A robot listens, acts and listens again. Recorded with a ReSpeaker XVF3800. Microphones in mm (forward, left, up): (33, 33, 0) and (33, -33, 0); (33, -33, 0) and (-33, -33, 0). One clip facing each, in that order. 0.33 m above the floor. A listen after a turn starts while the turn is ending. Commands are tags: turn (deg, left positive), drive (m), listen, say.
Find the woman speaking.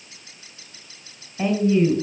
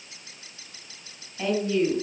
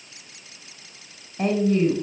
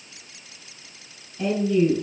<turn deg="25"/>
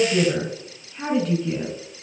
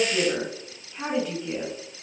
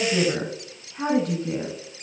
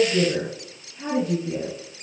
<turn deg="-10"/>
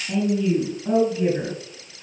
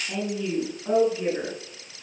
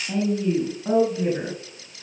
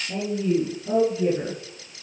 <say>Facing the woman speaking, over 4 m away.</say>